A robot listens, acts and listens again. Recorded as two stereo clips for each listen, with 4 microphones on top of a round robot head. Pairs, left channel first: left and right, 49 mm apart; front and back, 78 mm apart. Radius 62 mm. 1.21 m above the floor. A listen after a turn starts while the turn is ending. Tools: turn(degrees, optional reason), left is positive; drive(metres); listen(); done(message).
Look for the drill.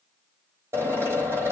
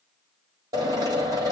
turn(degrees=-135, reason="The drill: 135° right.")
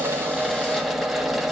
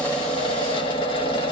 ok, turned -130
done("Facing the drill, 2 to 4 m away.")